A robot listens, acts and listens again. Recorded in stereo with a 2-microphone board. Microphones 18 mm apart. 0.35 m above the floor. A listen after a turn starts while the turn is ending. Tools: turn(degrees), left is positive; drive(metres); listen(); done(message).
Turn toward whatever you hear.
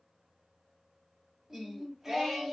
turn(degrees=-20)
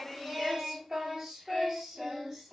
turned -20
turn(degrees=-40)
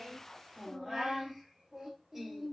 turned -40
turn(degrees=-30)
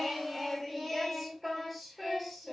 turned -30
turn(degrees=-20)
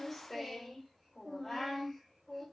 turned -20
turn(degrees=-10)
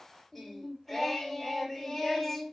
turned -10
done("Facing the singing.")